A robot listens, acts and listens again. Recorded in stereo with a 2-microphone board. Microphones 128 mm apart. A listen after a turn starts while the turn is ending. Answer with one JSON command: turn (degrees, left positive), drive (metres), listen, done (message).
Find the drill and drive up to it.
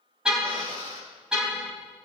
{"turn": -45}
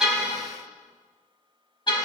{"listen": true}
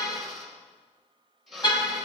{"drive": 1.0}
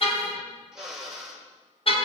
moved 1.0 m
{"drive": 1.0}
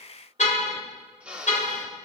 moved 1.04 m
{"turn": -10}
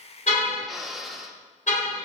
{"drive": 1.0}
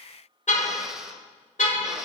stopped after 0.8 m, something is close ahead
{"done": "Arrived at the drill, straight ahead."}